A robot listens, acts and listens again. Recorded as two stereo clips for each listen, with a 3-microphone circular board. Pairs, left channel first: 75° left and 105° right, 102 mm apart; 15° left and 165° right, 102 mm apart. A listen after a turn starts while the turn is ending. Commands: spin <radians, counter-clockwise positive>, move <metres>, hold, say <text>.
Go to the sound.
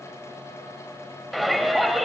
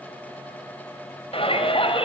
spin -0.26
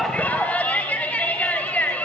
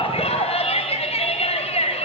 move 1.0
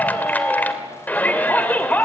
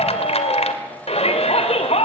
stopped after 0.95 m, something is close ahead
say Something is in my way. I am facing the shout but have not reached it.